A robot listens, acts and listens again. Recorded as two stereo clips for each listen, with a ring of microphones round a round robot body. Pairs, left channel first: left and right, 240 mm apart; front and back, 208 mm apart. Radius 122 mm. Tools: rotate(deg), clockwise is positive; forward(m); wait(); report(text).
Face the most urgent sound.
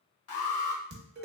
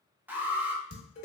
rotate(-100)
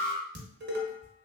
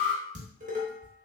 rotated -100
rotate(-20)
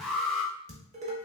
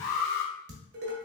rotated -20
report("Found it: an alarm, straight ahead, under 1 m away.")